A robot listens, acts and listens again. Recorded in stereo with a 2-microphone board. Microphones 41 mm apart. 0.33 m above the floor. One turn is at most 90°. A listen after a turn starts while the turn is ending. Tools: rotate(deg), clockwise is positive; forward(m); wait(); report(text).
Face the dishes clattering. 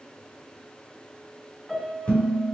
rotate(-25)
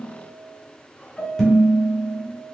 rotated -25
report("Facing the dishes clattering, 1 to 2 m away.")